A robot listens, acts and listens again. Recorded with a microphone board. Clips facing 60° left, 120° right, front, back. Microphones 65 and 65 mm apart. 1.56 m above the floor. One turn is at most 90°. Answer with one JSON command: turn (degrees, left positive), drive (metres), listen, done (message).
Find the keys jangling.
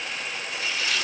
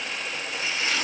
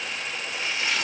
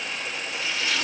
{"listen": true}
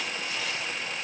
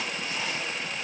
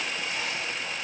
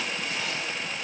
{"listen": true}
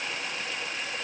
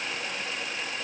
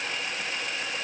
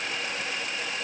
{"done": "I can't make out keys jangling to turn to."}